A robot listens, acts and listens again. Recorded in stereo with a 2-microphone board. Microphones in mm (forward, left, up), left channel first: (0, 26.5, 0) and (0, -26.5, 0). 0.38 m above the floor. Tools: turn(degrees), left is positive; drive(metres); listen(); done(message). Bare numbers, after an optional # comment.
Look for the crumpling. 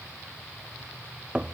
listen()
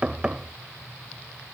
listen()
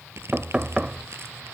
# The crumpling: about 55° right or 125° right.
turn(-55)
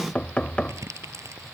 # So it is at 75° right.
turn(-75)
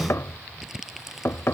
done("Facing the crumpling.")